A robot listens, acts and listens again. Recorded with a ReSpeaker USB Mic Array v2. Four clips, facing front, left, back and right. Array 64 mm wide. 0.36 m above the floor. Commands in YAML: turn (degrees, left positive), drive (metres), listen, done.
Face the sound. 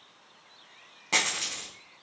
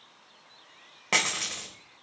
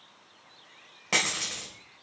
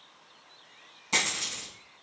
turn: 95
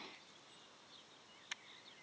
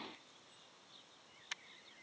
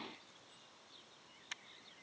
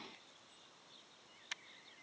done: "I heard a dropped coin from this way, but can't make it out now."